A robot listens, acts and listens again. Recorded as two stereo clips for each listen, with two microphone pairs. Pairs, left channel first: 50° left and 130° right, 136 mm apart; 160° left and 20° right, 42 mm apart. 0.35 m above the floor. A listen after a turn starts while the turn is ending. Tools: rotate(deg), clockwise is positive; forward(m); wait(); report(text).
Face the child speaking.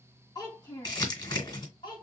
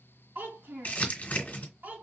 report("Facing the child speaking, 1 to 2 m away.")